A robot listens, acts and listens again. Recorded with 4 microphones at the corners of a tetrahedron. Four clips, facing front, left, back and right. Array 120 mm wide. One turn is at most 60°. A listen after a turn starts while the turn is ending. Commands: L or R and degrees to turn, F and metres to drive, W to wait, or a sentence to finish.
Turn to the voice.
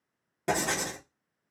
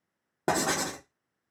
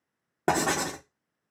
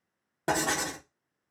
W
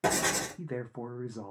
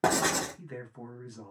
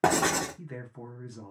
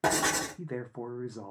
R45
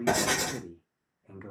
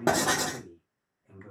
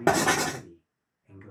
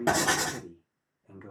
R30
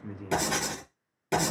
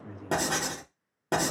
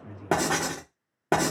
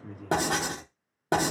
W
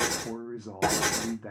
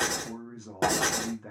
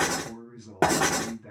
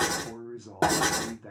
Facing the man speaking, under 1 m away.